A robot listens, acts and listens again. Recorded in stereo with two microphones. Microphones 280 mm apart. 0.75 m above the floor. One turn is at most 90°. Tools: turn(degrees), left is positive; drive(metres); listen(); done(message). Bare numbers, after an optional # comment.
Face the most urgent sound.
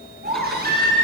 # The baby crying: about 35° right or 145° right.
turn(-35)
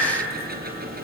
done("Facing the baby crying, over 4 m away.")